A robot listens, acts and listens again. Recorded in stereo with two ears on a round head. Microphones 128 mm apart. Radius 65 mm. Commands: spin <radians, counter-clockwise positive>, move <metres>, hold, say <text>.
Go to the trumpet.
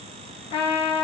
spin 0.79
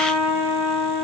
spin 1.57
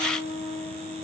spin -0.26
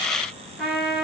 move 1.0
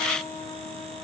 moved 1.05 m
move 1.0
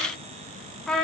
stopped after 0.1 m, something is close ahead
say I am next to the trumpet.